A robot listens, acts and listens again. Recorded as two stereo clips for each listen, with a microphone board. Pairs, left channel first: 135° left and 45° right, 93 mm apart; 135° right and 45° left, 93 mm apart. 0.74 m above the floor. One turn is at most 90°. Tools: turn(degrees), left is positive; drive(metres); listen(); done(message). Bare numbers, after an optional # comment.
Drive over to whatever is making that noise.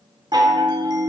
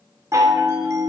drive(1.0)
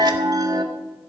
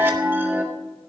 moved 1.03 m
# The chime is now 15° right.
turn(-15)
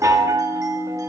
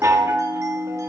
drive(1.0)
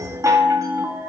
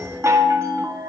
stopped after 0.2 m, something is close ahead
done("I am next to the chime.")